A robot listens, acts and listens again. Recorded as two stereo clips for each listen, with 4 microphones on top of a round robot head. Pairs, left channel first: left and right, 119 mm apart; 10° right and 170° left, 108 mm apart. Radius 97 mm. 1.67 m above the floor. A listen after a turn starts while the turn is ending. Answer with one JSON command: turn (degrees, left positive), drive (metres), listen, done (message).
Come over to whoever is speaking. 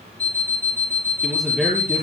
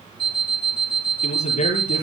{"drive": 1.0}
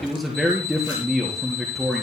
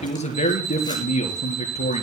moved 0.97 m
{"drive": 1.0}
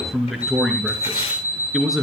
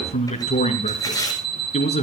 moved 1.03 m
{"drive": 1.0}
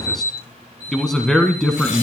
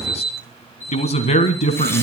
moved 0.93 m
{"drive": 1.0}
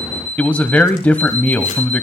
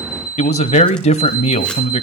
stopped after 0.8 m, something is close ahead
{"turn": 10}
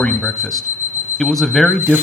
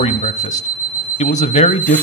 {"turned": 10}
{"done": "Arrived at the man speaking, straight ahead."}